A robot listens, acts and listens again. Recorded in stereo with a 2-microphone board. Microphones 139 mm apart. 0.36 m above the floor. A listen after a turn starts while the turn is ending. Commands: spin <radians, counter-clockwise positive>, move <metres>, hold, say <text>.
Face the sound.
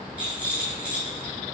spin -0.52
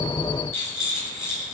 spin 0.35
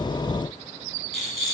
say Found it: a rattle, straight ahead, 1 to 2 m away.